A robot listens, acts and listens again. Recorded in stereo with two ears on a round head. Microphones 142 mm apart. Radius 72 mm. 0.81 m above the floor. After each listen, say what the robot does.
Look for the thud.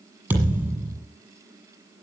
Turn 30° right.
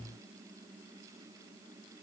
Keep listening.
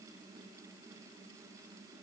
I heard a thud, but can't make it out now. It was about 20° left or 140° right.